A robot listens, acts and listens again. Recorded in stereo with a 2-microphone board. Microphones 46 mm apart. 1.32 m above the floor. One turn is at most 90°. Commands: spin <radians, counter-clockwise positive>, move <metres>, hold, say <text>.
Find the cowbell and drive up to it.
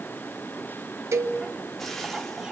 spin -1.57
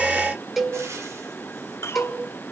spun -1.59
move 1.0
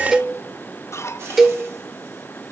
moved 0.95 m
move 1.0
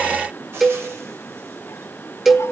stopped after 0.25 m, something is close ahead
say Arrived at the cowbell, straight ahead.